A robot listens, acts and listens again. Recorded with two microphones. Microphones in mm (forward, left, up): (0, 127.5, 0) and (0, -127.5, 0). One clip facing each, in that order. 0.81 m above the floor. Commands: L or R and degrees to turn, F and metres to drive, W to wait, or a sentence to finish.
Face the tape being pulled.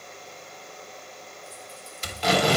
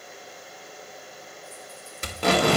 R55
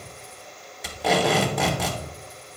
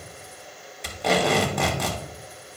Found it: tape being pulled, straight ahead.